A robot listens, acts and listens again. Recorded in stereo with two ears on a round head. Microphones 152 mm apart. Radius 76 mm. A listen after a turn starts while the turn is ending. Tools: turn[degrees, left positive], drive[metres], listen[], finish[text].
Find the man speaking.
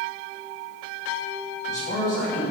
Thought: The man speaking: about 50° left or 130° left.
Action: turn[50]
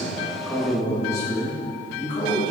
Thought: So it is at 30° left.
Action: turn[30]
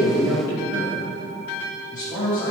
Thought: The man speaking is now 25° left.
Action: turn[25]
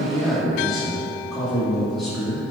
Action: finish[Facing the man speaking.]